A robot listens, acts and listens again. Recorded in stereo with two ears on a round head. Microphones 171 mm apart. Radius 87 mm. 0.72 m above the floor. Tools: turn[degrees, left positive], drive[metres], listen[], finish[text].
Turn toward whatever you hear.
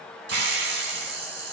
Thought: The hiss: about 65° right or 115° right.
Action: turn[-65]
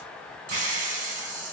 Thought: So it is at 45° right.
Action: turn[-45]
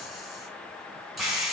Action: finish[Found it: a hiss, straight ahead, under 1 m away.]